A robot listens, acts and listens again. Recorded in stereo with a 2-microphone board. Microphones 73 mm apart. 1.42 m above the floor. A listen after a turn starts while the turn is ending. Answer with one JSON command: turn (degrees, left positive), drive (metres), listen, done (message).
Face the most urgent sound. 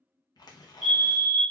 {"turn": -30}
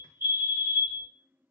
{"turn": -145}
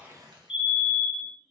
{"turn": -10}
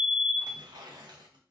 {"done": "Facing the fire alarm, 1 to 2 m away."}